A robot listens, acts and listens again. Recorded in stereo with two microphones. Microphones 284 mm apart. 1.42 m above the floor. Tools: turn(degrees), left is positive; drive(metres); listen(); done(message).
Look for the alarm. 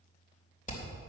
listen()
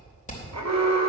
turn(degrees=-70)
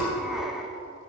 done("Facing the alarm, 1 to 2 m away.")